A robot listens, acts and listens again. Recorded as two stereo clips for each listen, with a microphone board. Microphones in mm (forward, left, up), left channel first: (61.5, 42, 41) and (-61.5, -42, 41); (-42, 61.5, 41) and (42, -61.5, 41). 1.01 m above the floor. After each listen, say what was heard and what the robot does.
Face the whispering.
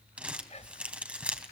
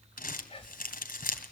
The whispering: 75° left. Turn 75° left.
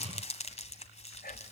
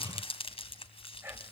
The whispering is now 15° left. Turn 15° left.
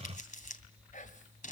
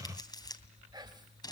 Facing the whispering, over 4 m away.